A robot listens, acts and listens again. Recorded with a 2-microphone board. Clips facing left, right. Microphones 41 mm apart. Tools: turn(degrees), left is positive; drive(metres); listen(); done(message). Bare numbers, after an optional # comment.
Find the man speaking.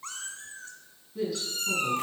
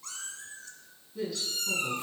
turn(30)
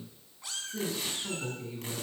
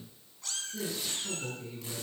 # So it is at 155° left.
turn(155)
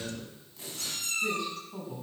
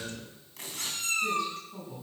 # The man speaking is now 15° left.
turn(15)
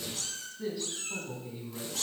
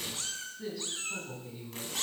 done("Facing the man speaking, over 4 m away.")